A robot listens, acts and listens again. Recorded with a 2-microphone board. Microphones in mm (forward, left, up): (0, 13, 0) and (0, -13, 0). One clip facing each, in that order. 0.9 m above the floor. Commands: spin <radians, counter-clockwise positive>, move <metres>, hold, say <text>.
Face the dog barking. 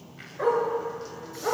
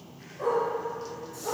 spin 0.96
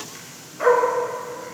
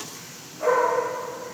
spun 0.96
spin 0.96
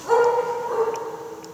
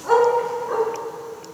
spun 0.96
spin -0.35
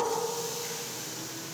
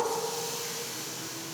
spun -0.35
hold
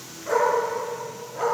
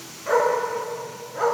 spin -0.35
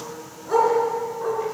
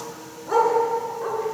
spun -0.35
spin -0.17
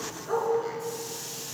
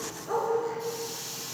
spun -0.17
say Found it: a dog barking, straight ahead.